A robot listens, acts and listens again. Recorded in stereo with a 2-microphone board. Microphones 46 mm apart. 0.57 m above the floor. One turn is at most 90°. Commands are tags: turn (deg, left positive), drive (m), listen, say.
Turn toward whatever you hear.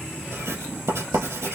<turn deg="-90"/>
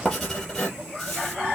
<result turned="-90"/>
<turn deg="10"/>
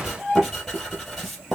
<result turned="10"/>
<say>Facing the writing, 2 to 4 m away.</say>